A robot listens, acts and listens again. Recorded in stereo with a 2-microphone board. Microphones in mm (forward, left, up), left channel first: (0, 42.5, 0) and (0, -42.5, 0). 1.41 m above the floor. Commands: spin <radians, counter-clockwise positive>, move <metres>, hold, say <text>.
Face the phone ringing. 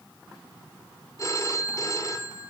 spin 0.61
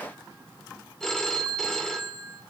say Facing the phone ringing, 2 to 4 m away.